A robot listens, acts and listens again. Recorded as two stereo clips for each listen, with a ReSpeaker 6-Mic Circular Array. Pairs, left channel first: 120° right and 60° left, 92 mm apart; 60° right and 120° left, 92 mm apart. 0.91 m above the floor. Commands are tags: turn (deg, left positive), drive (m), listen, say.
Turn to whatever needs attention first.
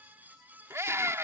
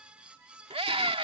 <turn deg="120"/>
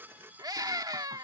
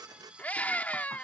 <turn deg="15"/>
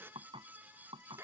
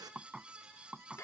<say>Found it: a scream, straight ahead.</say>